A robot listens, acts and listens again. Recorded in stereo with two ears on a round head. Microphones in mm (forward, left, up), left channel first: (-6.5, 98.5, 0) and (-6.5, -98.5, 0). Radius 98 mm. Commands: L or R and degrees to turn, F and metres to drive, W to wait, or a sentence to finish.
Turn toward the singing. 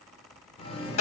L30
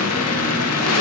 L135
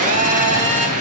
W
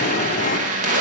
L35
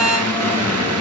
L10
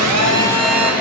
W
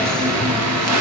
Found it: singing, straight ahead, 2 to 4 m away.